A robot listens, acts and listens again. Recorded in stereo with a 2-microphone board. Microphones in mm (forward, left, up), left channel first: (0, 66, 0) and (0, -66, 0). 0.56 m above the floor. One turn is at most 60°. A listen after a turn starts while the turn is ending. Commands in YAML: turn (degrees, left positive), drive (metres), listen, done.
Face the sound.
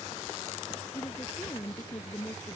turn: 20
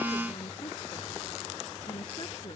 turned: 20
listen: true
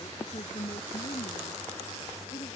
turn: 60
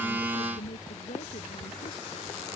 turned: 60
turn: 60
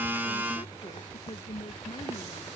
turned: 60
turn: 25
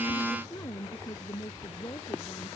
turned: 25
turn: 30
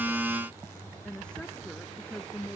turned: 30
done: "Found it: a woman speaking, straight ahead."